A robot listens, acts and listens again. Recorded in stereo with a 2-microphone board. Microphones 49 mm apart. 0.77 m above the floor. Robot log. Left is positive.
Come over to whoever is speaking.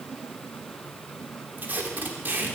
cmd idle
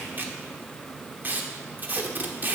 cmd idle
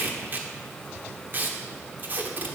end: I can't make out anyone speaking to turn to.